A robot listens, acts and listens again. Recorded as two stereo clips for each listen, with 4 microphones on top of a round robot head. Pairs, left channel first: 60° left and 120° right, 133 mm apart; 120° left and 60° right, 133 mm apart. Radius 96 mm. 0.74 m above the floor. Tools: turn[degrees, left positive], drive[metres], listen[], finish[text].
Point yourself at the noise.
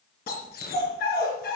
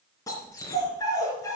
Thought: The dog barking: 55° left.
Action: turn[55]
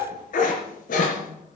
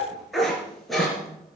Thought: The dog barking is now 35° left.
Action: turn[35]
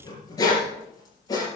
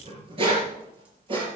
Action: finish[Facing the dog barking, over 4 m away.]